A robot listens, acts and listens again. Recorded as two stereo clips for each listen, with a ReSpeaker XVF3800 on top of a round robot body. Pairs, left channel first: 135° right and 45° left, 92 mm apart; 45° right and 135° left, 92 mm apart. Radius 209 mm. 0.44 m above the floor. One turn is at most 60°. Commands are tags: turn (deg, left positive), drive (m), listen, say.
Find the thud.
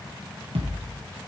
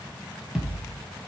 <turn deg="55"/>
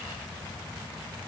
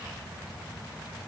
<say>I heard a thud from this way, but can't make it out now.</say>